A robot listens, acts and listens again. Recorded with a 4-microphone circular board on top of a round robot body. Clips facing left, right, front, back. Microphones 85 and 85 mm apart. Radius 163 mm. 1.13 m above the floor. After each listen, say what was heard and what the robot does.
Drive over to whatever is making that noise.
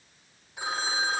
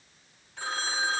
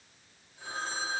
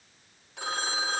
The phone ringing: 170° left. Turn 170° left.
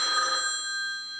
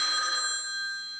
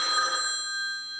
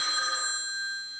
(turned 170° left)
The phone ringing is now 40° left. Turn 40° left.
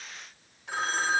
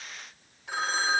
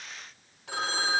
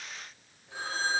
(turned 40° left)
Drive 1.0 m forward.
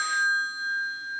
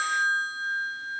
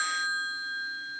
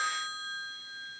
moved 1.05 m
Drive 1.0 m forward.
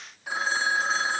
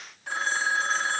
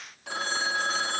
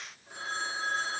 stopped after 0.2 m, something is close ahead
Arrived at the phone ringing, straight ahead.